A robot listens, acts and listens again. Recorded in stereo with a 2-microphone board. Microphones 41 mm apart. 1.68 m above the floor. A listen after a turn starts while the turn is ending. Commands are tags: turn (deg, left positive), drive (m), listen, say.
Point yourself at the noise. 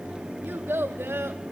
<turn deg="-70"/>
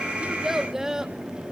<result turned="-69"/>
<turn deg="-15"/>
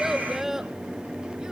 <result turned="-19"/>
<turn deg="-10"/>
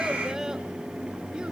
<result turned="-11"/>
<listen/>
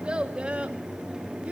<turn deg="-30"/>
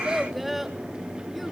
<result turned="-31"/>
<say>Facing the child speaking, 2 to 4 m away.</say>